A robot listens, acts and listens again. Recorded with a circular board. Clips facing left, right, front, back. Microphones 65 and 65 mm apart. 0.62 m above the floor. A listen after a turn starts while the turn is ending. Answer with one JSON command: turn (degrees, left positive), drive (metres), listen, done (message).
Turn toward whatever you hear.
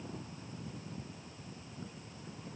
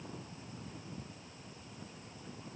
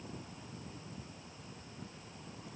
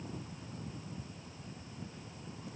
{"listen": true}
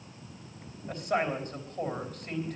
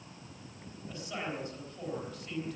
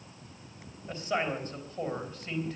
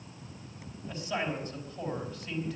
{"turn": 50}
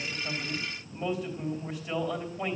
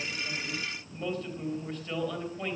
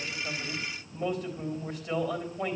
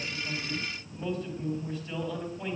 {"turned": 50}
{"turn": 10}
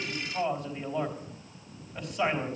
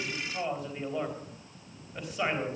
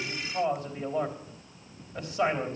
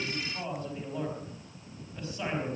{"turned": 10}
{"done": "Found it: a man speaking, straight ahead."}